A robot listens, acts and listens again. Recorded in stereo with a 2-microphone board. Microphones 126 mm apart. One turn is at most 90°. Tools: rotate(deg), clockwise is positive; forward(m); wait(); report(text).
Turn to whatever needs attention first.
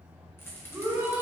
rotate(20)
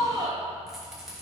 rotate(90)
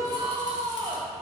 rotate(45)
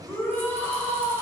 rotate(-20)
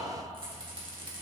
wait()
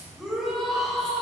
report("Found it: a shout, straight ahead.")